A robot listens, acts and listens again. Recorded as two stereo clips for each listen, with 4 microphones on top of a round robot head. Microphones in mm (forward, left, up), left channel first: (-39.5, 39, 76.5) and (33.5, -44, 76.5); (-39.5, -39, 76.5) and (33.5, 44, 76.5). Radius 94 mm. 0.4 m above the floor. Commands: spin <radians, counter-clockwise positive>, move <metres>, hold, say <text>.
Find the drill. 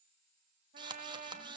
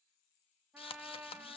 spin -1.66
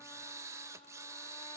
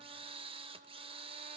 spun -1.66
spin 0.26
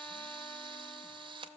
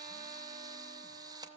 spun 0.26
say Facing the drill, under 1 m away.